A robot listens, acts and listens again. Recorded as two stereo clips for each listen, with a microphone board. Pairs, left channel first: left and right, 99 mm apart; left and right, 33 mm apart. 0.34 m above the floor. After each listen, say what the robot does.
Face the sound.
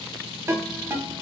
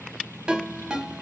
Turn 25° right.
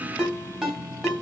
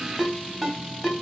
Found it: a ringtone, straight ahead.